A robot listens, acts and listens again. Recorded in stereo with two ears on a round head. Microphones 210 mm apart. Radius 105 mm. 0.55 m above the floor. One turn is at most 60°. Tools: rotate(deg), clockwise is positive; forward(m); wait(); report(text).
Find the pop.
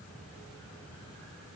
wait()
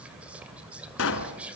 rotate(-55)
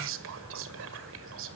wait()
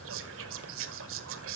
report("I heard a pop, but can't make it out now. It was about straight ahead or 70° left.")